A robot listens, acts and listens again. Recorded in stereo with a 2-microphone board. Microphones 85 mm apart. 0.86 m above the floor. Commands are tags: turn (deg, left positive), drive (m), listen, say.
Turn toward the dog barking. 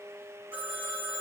<listen/>
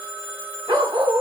<turn deg="-55"/>
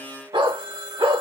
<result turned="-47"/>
<turn deg="-75"/>
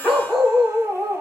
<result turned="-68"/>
<say>Facing the dog barking, 2 to 4 m away.</say>